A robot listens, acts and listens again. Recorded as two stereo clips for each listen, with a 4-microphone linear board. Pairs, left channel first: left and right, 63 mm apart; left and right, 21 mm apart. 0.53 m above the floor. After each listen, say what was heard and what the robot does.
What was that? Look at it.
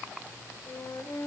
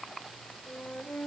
The flute: about 50° left or 130° left. Turn 50° left.
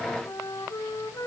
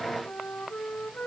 So it is at 80° left. Turn 80° left.
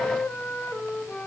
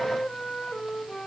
The flute is now 20° left. Turn 20° left.
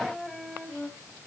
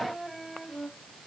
Facing the flute, 2 to 4 m away.